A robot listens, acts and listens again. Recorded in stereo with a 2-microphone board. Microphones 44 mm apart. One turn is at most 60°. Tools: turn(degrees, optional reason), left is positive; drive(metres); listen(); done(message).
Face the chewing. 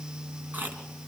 turn(degrees=-40, reason="The chewing: about 40° right or 140° right.")
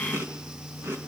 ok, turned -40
turn(degrees=-60, reason="So it is at 100° right.")
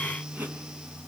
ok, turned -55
turn(degrees=-45, reason="The chewing is now 45° right.")
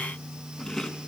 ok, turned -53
turn(degrees=10, reason="The chewing is now 10° left.")
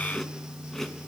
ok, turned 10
done("Facing the chewing.")